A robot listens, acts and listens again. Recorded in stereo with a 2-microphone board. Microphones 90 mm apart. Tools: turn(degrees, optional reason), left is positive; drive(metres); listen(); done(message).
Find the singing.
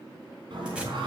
turn(degrees=-60, reason="The singing: about 60° right or 120° right.")
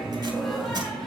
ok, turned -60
done("Found it: singing, straight ahead.")